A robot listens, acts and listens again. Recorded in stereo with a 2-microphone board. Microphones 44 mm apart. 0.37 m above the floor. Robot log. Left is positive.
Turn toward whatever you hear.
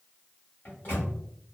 note: The microwave: about 40° left or 140° left.
cmd yaw +40
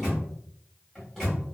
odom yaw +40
end: Found it: a microwave, straight ahead.